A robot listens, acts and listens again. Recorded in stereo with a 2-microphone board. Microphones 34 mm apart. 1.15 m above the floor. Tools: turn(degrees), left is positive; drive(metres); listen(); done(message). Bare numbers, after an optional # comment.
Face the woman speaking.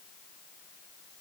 listen()
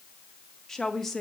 turn(30)
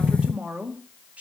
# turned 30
# So it is at 45° right.
turn(-45)
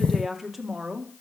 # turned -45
# The woman speaking is now 10° right.
turn(-10)
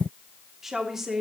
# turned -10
# The woman speaking is now 10° right.
turn(-10)
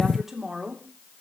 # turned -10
done("Found it: a woman speaking, straight ahead.")